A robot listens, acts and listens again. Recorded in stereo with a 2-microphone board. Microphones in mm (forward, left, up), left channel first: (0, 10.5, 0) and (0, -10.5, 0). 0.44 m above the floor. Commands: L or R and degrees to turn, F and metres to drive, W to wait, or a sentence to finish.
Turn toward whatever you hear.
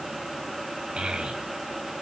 R70
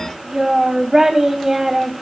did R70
R30
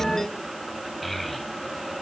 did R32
Facing the child speaking, 2 to 4 m away.